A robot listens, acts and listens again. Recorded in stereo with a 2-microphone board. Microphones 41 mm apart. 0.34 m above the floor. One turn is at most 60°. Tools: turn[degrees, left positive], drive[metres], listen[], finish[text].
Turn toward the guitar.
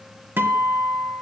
Thought: The guitar: about 65° right or 115° right.
Action: turn[-60]
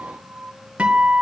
Thought: So it is at 40° right.
Action: turn[-40]
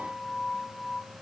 Action: finish[Facing the guitar, 1 to 2 m away.]